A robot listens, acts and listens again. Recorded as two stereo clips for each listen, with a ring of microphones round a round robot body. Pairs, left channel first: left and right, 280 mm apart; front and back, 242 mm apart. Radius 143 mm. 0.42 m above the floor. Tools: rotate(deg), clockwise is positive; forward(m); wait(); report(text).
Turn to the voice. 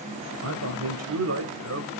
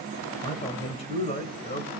rotate(60)
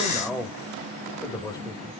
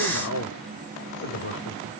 rotate(-15)
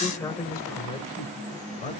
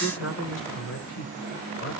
rotate(-25)
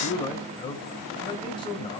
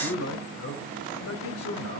rotate(-20)
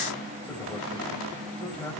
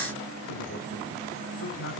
report("Facing the man speaking, 2 to 4 m away.")